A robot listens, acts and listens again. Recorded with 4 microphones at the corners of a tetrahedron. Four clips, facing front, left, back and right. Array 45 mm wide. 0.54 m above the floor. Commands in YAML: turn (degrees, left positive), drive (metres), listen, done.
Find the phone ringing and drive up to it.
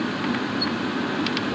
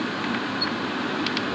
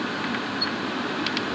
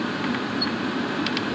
listen: true
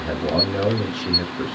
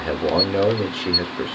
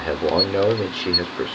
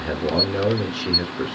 listen: true
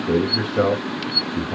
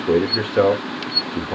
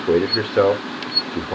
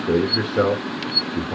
done: "I can't make out a phone ringing, only a man speaking."